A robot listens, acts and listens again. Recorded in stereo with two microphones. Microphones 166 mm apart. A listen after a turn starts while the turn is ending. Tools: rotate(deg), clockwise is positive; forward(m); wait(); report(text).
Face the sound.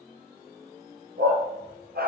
rotate(70)
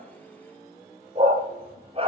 rotate(35)
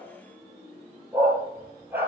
rotate(15)
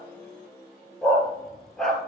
report("Facing the dog barking, 2 to 4 m away.")